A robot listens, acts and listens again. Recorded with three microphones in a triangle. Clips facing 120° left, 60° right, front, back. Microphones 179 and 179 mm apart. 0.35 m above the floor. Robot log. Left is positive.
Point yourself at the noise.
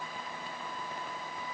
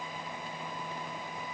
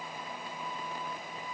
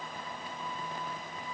cmd idle
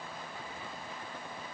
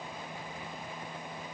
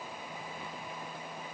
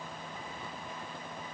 cmd idle
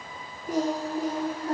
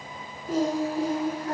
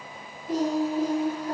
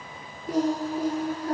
note: The singing: straight behind.
cmd yaw +180
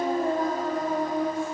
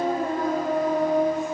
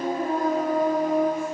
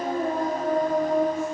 note: The singing is now 55° right.
cmd yaw -55
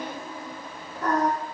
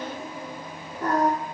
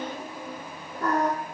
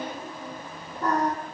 end: Facing the singing.